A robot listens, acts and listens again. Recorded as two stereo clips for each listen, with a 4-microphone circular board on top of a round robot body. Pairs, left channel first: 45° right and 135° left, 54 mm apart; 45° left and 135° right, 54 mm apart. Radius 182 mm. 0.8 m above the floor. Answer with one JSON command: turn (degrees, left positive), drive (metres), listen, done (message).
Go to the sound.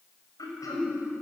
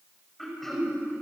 {"turn": -40}
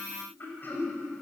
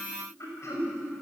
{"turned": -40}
{"turn": 10}
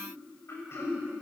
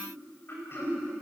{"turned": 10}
{"drive": 1.0}
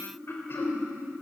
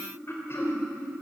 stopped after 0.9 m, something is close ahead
{"done": "Blocked. The throat clearing is further on, straight ahead."}